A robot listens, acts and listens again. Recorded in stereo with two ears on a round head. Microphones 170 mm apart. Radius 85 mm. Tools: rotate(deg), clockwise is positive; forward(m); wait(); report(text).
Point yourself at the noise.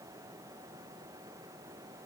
wait()
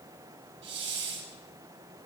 rotate(70)
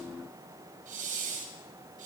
rotate(45)
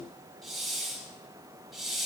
report("Found it: a hiss, straight ahead.")